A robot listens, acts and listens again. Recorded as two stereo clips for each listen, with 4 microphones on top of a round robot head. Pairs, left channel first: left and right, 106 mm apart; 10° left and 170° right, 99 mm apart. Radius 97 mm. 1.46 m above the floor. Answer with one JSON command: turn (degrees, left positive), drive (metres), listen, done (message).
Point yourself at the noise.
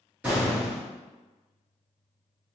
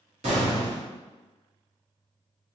{"turn": -170}
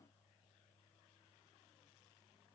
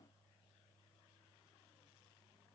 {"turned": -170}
{"done": "I heard an explosion from this way, but can't make it out now."}